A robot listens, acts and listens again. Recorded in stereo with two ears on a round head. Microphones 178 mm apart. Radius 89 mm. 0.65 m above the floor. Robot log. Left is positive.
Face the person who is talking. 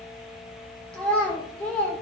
cmd yaw +30
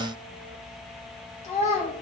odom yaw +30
note: So it is at 145° left.
cmd yaw +145
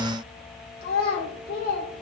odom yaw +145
note: The child speaking is now 55° left.
cmd yaw +55
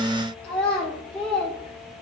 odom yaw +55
end: Facing the child speaking, 1 to 2 m away.